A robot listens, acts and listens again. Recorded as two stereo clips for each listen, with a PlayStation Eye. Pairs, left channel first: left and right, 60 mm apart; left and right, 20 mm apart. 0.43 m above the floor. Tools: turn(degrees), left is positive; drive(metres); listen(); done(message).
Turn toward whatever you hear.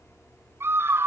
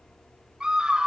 turn(degrees=-45)
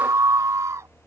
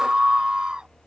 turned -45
turn(degrees=-80)
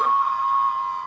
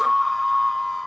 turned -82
done("Found it: a scream, straight ahead.")